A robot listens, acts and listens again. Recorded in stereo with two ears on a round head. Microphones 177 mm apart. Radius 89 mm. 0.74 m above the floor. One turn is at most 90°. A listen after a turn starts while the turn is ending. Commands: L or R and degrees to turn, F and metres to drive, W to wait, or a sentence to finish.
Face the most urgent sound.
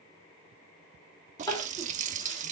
L20
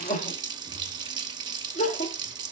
L90
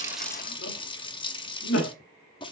L90
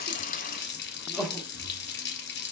Facing the crying, 1 to 2 m away.